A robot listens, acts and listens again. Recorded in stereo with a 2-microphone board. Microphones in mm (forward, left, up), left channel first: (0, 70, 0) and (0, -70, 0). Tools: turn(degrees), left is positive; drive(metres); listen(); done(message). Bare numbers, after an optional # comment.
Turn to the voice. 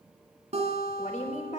# The woman speaking: about 65° left or 115° left.
turn(65)
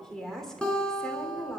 done("Facing the woman speaking.")